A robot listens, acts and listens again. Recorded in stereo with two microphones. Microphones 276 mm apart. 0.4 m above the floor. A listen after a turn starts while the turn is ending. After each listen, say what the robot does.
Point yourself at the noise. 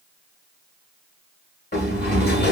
Turn 35° left.
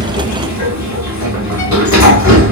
Turn 110° left.
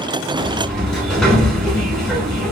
Facing the sliding door.